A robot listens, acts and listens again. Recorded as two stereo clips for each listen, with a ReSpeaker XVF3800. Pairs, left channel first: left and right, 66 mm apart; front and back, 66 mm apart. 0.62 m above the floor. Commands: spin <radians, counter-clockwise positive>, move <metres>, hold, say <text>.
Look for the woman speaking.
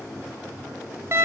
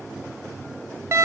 hold
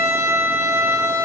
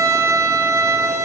hold
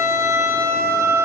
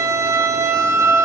say I can't make out a woman speaking, only a violin.